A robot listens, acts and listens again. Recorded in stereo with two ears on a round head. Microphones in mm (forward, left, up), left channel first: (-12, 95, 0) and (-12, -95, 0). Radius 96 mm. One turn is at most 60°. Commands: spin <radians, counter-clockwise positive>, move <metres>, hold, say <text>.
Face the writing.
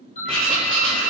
spin 0.52
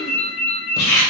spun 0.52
spin 1.05
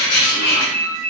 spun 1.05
spin 1.05
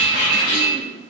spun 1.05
spin 1.05
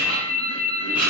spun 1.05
spin -0.17
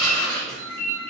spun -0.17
say Found it: writing, straight ahead.